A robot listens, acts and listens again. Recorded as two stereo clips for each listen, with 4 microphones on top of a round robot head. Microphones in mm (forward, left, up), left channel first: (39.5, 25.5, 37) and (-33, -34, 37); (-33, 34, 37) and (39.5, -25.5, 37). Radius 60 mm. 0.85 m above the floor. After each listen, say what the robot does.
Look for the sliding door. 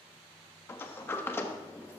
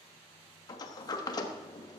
Turn 100° left.
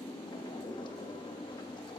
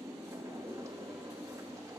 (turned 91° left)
Turn 15° left.
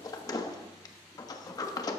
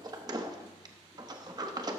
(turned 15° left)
Found it: a sliding door, straight ahead, 1 to 2 m away.